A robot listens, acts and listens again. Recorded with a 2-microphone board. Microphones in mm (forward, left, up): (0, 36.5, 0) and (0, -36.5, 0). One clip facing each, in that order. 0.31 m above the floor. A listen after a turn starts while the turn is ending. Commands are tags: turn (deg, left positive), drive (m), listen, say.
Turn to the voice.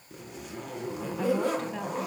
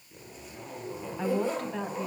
<turn deg="30"/>
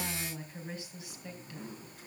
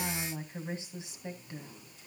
<turn deg="-30"/>
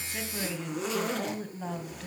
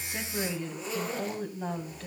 <say>Found it: a woman speaking, straight ahead.</say>